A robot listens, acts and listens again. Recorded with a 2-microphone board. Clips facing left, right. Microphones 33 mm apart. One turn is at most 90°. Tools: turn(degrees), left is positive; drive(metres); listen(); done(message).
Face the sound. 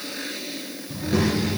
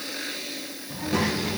turn(degrees=30)
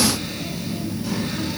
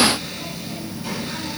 turn(degrees=-30)
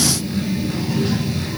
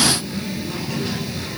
done("Facing the child speaking.")